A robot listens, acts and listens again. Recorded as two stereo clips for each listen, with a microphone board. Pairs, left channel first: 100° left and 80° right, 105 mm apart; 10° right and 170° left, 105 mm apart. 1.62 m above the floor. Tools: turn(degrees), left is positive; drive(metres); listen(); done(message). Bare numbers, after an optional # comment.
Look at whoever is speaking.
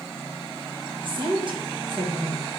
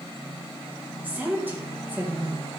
# The woman speaking: 115° right.
turn(-115)
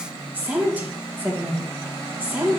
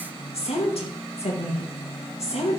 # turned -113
done("Found it: a woman speaking, straight ahead.")